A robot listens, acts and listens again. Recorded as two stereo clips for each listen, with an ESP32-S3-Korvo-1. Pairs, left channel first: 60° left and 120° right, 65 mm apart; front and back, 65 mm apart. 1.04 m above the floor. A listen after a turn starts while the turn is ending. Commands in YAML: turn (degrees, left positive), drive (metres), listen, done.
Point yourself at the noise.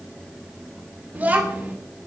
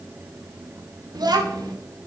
turn: 175
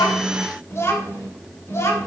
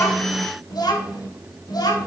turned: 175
turn: 15
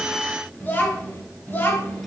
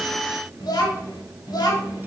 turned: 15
done: "Facing the child speaking, over 4 m away."